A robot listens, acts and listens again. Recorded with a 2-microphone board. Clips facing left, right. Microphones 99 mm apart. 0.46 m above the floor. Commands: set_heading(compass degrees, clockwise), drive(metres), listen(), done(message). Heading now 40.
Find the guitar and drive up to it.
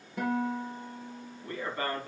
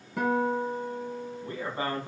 set_heading(130)
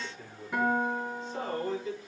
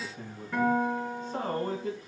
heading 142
set_heading(127)
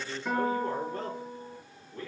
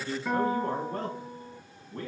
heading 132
drive(1.0)
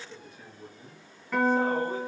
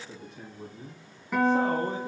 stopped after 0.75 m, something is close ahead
set_heading(142)
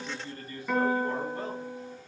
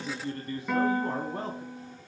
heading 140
done("Something is in my way. I am facing the guitar but have not reached it.")